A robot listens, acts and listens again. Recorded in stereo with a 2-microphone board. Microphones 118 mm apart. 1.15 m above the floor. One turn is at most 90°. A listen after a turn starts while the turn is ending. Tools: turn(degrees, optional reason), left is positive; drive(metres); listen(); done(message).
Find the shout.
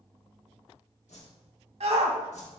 turn(degrees=-65, reason="The shout: about 65° right or 115° right.")
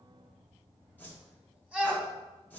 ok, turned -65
turn(degrees=-10, reason="So it is at 10° right.")
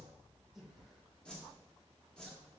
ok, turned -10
listen()
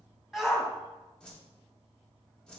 done("Found it: a shout, straight ahead.")